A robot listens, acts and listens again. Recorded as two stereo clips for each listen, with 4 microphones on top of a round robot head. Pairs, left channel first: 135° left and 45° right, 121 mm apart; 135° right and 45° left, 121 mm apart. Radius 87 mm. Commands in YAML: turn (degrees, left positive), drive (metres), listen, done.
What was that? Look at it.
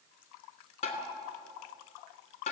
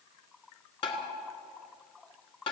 turn: 175
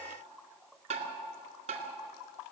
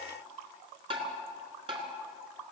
done: "Found it: tapping, straight ahead, 2 to 4 m away."